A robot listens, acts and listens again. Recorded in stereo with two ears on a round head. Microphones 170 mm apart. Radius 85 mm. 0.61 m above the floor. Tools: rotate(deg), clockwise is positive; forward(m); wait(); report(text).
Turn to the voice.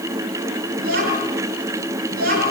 rotate(50)
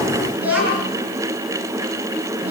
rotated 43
rotate(10)
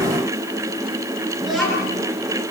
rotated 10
report("Facing the child speaking.")